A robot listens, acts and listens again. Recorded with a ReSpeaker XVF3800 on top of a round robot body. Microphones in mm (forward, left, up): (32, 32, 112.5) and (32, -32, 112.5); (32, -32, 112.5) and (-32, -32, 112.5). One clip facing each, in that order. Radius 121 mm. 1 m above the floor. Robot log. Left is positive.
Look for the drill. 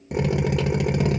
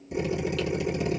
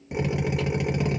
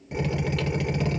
note: The drill: 75° left.
cmd yaw +75
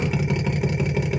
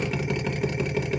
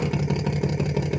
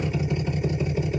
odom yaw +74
end: Found it: a drill, straight ahead.